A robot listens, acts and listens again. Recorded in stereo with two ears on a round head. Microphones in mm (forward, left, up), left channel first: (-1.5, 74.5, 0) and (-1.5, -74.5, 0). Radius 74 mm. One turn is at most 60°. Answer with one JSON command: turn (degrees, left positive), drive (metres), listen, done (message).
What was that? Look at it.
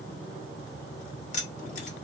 {"turn": 50}
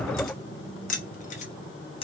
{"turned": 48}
{"turn": 35}
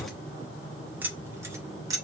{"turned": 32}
{"turn": -25}
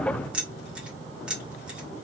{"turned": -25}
{"done": "Facing the keys jangling, 1 to 2 m away."}